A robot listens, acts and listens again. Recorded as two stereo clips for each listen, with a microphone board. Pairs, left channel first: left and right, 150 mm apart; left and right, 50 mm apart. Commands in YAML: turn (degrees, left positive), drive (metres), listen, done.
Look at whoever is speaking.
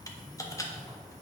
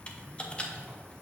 listen: true
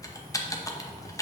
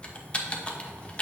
listen: true
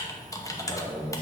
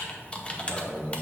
turn: 35
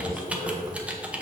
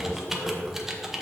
turn: 105
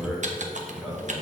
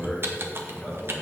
done: "Found it: a man speaking, straight ahead."